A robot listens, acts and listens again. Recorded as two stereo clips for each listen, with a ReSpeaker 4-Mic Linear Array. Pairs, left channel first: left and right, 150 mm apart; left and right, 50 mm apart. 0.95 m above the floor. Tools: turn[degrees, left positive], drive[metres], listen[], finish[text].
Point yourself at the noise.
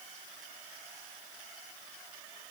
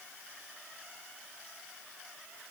Action: listen[]
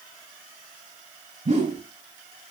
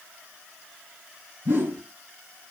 Thought: The whoosh: about 45° right or 135° right.
Action: turn[-45]
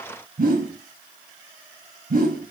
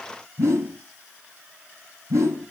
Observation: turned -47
Thought: So it is at 85° right.
Action: turn[-85]
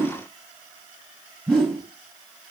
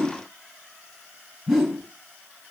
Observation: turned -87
Action: finish[Found it: a whoosh, straight ahead.]